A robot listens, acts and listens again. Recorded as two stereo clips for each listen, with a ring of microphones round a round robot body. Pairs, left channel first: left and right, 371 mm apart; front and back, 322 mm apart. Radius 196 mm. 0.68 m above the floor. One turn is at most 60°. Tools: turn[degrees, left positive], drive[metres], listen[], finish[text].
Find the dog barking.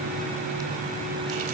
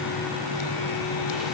Action: listen[]
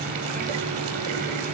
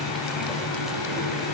Action: listen[]
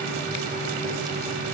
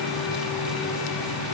Action: finish[I can't make out a dog barking to turn to.]